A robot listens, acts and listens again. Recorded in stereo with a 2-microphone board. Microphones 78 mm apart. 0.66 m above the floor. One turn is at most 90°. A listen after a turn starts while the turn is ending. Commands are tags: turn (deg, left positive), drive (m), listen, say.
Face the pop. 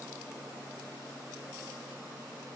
<listen/>
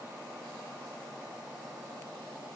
<listen/>
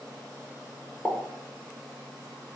<turn deg="30"/>
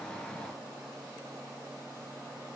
<listen/>
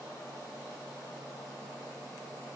<say>I heard a pop, but can't make it out now. It was about 20° right or 140° left.</say>